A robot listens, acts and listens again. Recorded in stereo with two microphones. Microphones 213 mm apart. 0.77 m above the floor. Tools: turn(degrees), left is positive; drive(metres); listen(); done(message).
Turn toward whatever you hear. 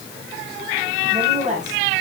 turn(degrees=-35)
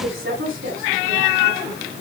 turn(degrees=-105)
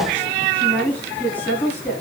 turn(degrees=10)
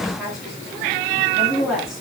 done("Found it: a woman speaking, straight ahead, over 4 m away.")